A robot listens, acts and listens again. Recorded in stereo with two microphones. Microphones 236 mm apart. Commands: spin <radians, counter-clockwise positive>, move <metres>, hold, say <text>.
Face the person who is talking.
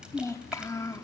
spin 0.52
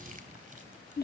spin 2.36
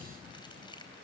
hold
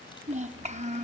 spin -0.52
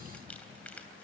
hold
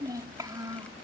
spin -0.26
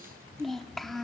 say Facing the child speaking, under 1 m away.